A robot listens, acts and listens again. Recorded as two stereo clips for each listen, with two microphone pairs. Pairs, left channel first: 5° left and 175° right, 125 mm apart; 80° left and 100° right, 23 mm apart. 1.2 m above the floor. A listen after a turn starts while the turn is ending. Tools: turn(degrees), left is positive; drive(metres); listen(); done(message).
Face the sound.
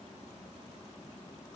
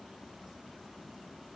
listen()
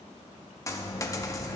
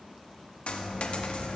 turn(degrees=70)
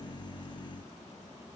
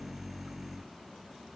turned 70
done("I heard a dropped coin from this way, but can't make it out now.")